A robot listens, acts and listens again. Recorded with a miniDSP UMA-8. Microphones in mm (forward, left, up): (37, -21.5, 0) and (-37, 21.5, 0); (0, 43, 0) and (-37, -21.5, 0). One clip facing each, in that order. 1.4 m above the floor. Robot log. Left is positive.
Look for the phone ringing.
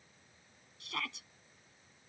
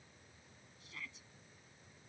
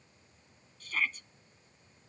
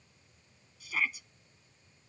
cmd idle
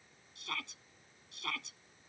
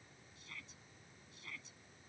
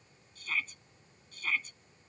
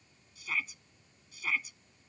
cmd idle
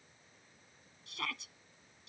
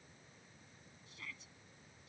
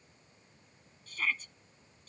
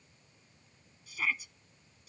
end: I can't make out a phone ringing to turn to.